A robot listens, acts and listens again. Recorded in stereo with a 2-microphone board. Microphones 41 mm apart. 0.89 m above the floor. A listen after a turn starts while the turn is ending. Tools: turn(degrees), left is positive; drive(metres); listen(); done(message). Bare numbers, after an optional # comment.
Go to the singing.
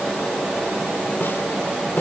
listen()
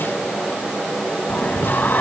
# The singing: about 55° left or 125° left.
turn(55)
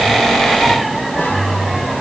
drive(1.0)
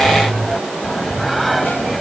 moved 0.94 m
drive(1.0)
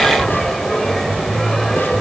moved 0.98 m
# The singing is now 10° left.
turn(10)
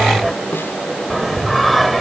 drive(1.0)
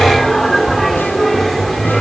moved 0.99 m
drive(1.0)
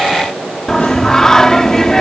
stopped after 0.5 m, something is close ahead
# The singing is now 15° left.
turn(15)
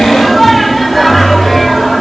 done("Arrived at the singing, straight ahead.")